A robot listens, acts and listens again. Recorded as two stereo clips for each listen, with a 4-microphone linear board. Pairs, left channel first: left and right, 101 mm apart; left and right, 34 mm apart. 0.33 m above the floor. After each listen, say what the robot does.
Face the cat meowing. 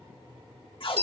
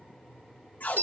Keep listening.
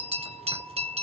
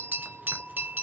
Keep listening.
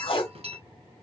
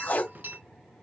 I can't make out a cat meowing, only a bell and tape being pulled.